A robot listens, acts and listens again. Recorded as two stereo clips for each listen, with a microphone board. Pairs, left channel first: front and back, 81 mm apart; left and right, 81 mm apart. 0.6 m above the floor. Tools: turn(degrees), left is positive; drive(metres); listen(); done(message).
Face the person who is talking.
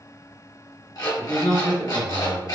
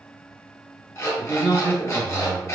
turn(degrees=-10)
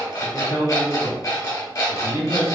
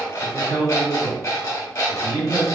done("Facing the man speaking.")